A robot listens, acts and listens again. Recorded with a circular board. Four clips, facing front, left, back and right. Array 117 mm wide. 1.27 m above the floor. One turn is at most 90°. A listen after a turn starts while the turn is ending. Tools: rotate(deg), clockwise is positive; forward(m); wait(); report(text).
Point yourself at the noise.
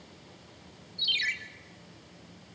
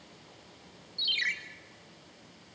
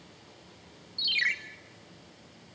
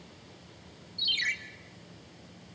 rotate(-90)
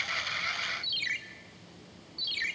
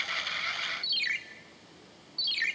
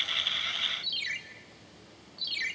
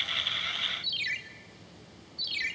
rotate(-70)
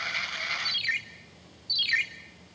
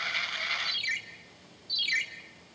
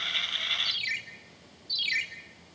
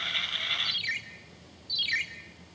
rotate(15)
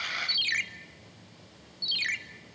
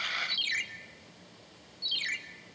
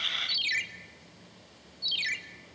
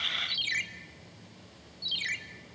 report("Facing the ringtone.")